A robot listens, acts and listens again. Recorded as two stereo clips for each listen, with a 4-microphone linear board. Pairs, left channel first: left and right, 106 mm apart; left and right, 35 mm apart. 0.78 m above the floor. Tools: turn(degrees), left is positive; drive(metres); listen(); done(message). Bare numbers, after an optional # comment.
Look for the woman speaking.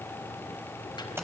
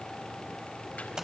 listen()
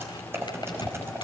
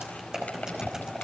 listen()
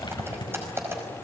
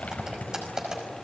done("I can't make out a woman speaking, only crumpling and typing on a keyboard.")